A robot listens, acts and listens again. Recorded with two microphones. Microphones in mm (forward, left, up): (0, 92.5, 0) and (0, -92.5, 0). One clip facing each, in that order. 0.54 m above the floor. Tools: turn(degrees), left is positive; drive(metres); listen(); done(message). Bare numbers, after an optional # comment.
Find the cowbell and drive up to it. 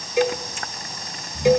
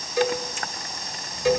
# The cowbell: about 20° left or 160° left.
turn(20)
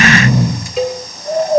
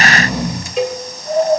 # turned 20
drive(1.0)
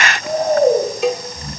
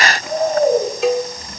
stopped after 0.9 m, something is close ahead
done("Arrived at the cowbell, straight ahead.")